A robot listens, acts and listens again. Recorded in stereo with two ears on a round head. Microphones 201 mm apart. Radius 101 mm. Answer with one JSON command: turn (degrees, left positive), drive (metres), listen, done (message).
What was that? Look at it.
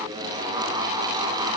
{"listen": true}
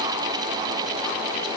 {"listen": true}
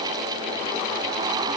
{"done": "I can't make out anything."}